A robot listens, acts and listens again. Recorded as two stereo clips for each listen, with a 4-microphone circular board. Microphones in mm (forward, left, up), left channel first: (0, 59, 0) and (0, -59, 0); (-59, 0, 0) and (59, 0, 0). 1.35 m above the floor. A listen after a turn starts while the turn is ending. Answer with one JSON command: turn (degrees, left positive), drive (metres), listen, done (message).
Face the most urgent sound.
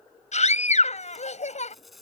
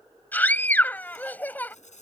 {"turn": 105}
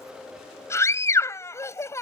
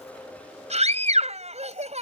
{"turn": 25}
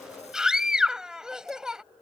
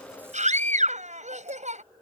{"done": "Facing the scream."}